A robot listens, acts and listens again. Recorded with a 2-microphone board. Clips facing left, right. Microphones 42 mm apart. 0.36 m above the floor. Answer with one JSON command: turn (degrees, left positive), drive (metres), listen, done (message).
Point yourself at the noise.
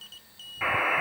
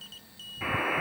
{"turn": 30}
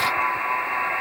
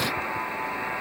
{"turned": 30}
{"turn": 120}
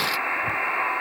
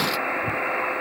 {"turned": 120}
{"turn": 20}
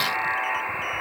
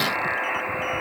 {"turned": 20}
{"done": "Found it: a buzzer, straight ahead, over 4 m away."}